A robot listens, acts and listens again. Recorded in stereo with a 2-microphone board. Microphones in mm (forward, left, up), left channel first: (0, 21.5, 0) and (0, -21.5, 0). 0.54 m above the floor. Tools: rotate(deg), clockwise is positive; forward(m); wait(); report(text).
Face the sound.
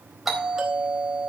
rotate(30)
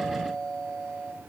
rotate(-25)
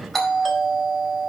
rotate(-10)
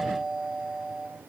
report("Facing the doorbell.")